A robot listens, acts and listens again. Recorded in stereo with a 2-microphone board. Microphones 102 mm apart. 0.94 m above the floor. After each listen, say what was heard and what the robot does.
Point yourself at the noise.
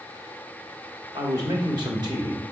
The man speaking: about 50° right or 130° right. Turn 50° right.
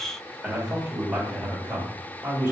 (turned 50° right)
So it is at 20° right. Turn 20° right.
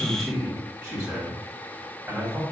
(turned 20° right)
The man speaking is now 10° right. Turn 10° right.
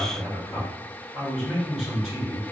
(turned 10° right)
Facing the man speaking.